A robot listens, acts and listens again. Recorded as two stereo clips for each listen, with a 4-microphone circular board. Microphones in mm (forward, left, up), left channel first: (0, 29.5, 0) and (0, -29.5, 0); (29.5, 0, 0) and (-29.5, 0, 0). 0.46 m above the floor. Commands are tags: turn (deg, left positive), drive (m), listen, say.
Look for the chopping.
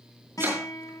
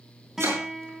<turn deg="-135"/>
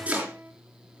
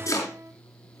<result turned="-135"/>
<turn deg="-20"/>
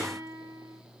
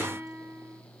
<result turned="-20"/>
<listen/>
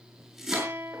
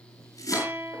<say>Facing the chopping, over 4 m away.</say>